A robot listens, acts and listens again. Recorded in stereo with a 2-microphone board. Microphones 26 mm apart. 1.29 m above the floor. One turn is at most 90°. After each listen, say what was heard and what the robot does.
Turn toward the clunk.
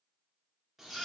Keep listening.
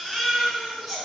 Keep listening.
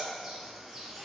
I can't make out a clunk, only a bird and a baby crying.